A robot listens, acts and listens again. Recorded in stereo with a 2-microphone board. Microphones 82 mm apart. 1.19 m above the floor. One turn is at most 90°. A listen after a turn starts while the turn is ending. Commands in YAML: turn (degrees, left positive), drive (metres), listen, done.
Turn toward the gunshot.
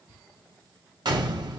turn: -65
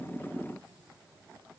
listen: true
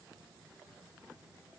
done: "I heard a gunshot, but can't make it out now. It was about straight ahead or 50° right."